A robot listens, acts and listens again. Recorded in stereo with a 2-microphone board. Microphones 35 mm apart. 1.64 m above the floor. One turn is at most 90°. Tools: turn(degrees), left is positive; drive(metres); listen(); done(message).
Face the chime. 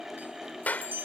turn(degrees=-70)
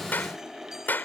listen()
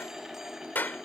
listen()
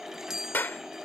turn(degrees=-15)
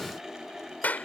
listen()
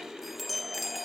done("Facing the chime.")